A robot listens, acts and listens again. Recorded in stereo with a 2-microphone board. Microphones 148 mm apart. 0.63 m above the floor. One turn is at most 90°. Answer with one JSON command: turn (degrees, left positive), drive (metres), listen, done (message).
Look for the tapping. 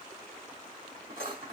{"listen": true}
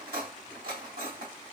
{"listen": true}
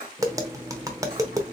{"turn": -25}
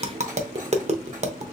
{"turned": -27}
{"turn": -90}
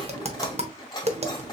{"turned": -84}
{"turn": -45}
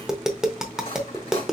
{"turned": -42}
{"done": "Found it: tapping, straight ahead."}